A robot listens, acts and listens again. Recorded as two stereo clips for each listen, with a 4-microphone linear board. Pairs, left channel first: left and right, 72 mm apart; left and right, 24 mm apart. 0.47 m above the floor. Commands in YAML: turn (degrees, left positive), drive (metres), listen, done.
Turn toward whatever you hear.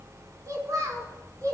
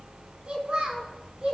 turn: -55
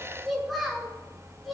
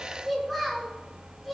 done: "Found it: a child speaking, straight ahead, 2 to 4 m away."